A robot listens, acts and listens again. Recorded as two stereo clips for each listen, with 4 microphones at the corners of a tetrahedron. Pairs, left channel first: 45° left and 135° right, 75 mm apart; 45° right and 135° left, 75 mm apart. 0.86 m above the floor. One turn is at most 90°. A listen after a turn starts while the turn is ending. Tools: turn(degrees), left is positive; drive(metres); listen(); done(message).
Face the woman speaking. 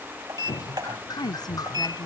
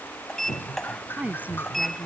turn(degrees=65)
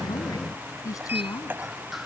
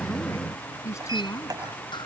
done("Facing the woman speaking.")